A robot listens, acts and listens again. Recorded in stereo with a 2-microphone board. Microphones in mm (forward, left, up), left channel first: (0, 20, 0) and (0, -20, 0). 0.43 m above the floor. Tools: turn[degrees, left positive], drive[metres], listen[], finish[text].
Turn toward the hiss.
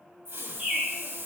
Action: turn[-90]
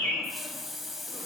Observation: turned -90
Action: finish[Found it: a hiss, straight ahead.]